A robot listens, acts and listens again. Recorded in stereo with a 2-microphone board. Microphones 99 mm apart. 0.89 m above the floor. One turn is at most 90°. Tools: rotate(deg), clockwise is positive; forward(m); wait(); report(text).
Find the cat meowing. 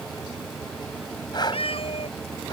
rotate(-70)
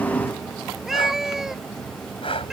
report("Found it: a cat meowing, straight ahead.")